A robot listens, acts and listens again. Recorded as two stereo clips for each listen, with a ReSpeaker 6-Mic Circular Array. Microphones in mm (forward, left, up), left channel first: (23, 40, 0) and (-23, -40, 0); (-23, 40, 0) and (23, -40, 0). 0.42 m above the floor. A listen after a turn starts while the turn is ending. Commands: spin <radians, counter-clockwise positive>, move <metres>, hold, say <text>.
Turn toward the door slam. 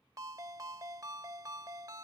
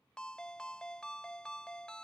hold
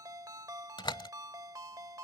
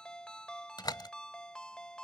spin 1.48
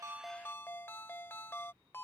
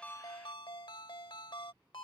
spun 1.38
say Facing where the door slam came from. I can't hear it now.